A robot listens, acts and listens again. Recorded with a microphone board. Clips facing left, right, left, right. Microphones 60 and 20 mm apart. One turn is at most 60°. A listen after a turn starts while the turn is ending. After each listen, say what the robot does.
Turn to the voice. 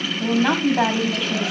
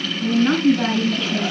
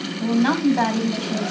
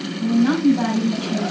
Turn 60° left.
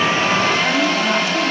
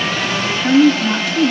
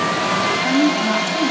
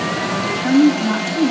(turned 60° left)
Turn 20° left.
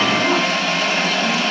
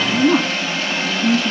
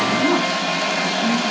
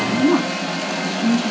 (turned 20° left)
Facing the woman speaking.